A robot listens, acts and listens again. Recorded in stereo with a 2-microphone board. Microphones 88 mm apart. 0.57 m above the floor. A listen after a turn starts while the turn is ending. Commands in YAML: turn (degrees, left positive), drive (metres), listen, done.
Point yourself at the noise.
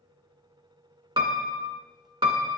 turn: -65
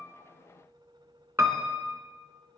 turn: -30
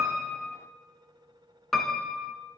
done: "Facing the piano, under 1 m away."